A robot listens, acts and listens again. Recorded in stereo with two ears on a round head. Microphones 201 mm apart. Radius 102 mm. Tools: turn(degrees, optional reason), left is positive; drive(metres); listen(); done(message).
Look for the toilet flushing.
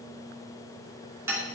listen()
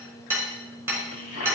turn(degrees=75, reason="The toilet flushing: about 75° left or 105° left.")
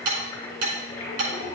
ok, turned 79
turn(degrees=25, reason="So it is at 25° left.")
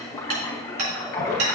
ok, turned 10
turn(degrees=15, reason="The toilet flushing is now 15° left.")
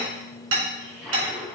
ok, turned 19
done("Facing the toilet flushing.")